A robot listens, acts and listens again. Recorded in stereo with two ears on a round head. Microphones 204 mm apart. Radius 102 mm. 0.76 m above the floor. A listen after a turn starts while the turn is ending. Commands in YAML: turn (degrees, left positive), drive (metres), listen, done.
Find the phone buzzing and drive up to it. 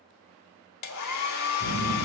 turn: -60
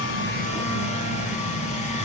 turn: -60
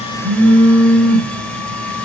turn: -35
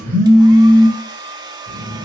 turn: -10
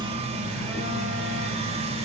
drive: 1.0
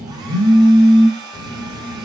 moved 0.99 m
drive: 1.0
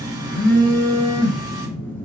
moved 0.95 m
turn: 10
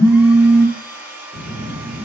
drive: 1.0
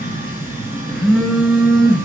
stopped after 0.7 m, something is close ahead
done: "Arrived at the phone buzzing, straight ahead."